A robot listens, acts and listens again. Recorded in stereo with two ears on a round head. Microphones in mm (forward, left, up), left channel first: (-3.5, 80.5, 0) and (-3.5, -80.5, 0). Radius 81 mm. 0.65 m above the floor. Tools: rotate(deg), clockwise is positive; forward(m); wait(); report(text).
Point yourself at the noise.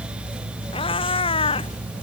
rotate(-30)
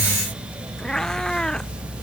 report("Found it: a cat meowing, straight ahead.")